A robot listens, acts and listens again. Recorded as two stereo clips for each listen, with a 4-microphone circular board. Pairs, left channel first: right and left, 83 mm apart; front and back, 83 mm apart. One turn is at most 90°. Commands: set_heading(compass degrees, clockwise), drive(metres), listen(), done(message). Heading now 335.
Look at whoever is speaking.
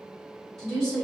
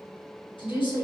done("Found it: a woman speaking, straight ahead, 1 to 2 m away.")